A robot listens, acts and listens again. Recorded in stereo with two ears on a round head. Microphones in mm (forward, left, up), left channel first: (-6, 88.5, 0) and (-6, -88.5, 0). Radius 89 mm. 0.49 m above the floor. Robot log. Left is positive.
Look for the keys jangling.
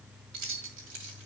note: The keys jangling: about 70° right or 110° right.
cmd yaw -70
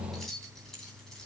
end: Found it: keys jangling, straight ahead.